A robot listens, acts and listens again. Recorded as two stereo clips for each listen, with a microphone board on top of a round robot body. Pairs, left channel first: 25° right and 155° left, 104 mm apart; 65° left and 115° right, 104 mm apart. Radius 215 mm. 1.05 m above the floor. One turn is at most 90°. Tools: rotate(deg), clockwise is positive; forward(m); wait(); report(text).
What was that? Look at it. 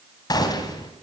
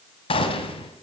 rotate(-30)
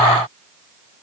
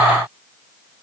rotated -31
report("I heard a gunshot from this way, but can't make it out now.")